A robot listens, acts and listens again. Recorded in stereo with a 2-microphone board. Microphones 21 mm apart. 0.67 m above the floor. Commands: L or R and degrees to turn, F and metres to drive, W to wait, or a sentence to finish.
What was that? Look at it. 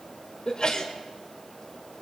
L40
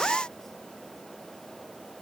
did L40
W
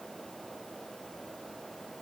I heard a sneeze, but can't make it out now. It was about straight ahead or 100° left.